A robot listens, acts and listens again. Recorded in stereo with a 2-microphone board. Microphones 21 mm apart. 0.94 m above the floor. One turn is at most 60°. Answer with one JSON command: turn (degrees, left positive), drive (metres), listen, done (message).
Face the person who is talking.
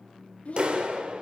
{"turn": 60}
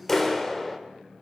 {"listen": true}
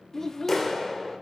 {"turn": 20}
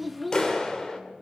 {"done": "Found it: a child speaking, straight ahead."}